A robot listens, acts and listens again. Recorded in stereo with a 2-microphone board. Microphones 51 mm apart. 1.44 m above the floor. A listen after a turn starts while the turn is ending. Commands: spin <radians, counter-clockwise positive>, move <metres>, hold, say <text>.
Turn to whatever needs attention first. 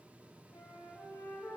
hold
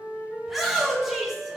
spin 0.52
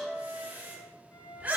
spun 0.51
spin -0.52
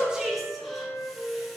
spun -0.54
say Facing the shout, 1 to 2 m away.